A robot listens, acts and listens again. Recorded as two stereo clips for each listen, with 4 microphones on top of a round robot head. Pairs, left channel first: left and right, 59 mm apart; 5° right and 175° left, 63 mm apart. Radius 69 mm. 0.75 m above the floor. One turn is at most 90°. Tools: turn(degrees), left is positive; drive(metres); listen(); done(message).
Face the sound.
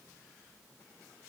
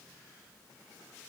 listen()
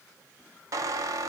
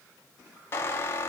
turn(degrees=-60)
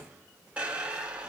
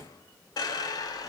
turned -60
turn(degrees=-15)
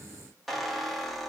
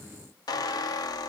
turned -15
done("Facing the squeak, under 1 m away.")